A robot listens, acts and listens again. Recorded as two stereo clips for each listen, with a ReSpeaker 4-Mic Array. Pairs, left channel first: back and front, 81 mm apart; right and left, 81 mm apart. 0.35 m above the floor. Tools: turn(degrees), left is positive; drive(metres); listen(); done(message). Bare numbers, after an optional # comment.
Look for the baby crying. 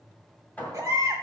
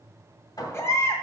# The baby crying: 40° right.
turn(-40)
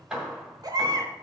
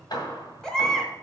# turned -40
# The baby crying is now 10° right.
turn(-10)
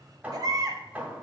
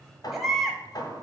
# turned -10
done("Facing the baby crying, 1 to 2 m away.")